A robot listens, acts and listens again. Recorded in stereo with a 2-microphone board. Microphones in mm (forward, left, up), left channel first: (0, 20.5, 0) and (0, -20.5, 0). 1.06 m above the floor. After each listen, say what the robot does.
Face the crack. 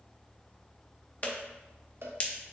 Turn 35° left.
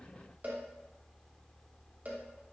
Keep listening.
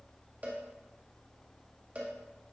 I heard a crack, but can't make it out now. It was about straight ahead or 110° left.